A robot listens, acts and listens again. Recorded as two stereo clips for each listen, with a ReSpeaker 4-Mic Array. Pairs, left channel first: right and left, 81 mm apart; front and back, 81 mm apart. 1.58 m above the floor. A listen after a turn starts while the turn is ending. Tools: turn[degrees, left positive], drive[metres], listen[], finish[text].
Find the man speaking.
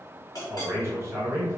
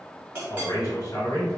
Thought: The man speaking: 35° left.
Action: turn[35]
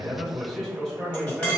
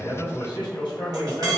Action: finish[Facing the man speaking.]